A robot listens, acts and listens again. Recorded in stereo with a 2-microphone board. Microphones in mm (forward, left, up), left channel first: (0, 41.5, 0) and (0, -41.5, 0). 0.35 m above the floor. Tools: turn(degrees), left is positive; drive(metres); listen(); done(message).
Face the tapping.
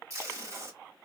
listen()
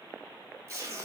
listen()
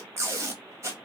done("I can't make out tapping, only tape being pulled.")